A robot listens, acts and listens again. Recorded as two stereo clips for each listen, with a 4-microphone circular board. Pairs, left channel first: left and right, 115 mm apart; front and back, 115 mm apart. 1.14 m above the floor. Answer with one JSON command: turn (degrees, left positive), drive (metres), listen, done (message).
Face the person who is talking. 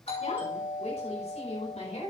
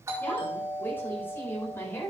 {"turn": 70}
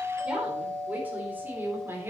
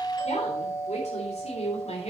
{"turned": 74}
{"turn": -20}
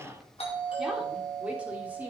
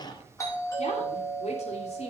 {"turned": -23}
{"turn": -15}
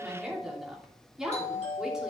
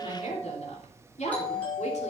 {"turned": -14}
{"done": "Facing the woman speaking."}